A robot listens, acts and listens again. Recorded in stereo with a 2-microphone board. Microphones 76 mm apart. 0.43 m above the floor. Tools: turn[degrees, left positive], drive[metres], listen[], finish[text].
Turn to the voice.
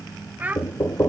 Thought: The child speaking: about 20° right or 160° right.
Action: turn[-20]
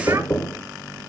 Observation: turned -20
Action: listen[]
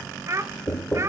Thought: So it is at 140° right.
Action: turn[-140]
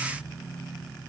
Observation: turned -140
Action: listen[]
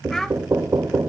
Action: listen[]
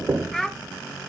Action: finish[Found it: a child speaking, straight ahead, under 1 m away.]